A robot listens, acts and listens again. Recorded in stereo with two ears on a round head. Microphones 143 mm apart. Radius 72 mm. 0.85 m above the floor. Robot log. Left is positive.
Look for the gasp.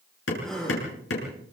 cmd yaw +30
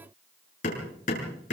cmd idle
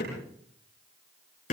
end: I heard a gasp, but can't make it out now. It was about 25° right or 145° left.